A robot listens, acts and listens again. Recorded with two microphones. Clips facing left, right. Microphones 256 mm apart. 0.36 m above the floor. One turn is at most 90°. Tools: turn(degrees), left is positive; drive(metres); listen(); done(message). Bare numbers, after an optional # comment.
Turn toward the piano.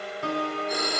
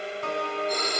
# The piano: about 40° left or 140° left.
turn(40)
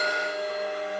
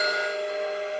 listen()
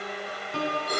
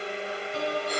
# So it is at 95° left.
turn(90)
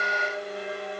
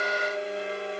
listen()
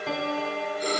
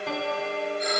done("Facing the piano, 2 to 4 m away.")